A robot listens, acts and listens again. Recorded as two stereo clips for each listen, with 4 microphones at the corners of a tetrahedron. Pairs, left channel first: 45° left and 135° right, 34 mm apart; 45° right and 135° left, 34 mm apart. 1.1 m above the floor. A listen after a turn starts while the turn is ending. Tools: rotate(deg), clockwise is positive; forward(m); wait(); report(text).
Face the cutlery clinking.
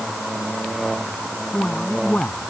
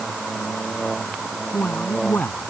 wait()
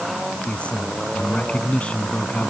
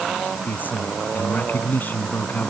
wait()
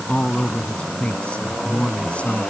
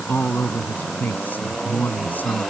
report("I can't make out cutlery clinking, only a man speaking.")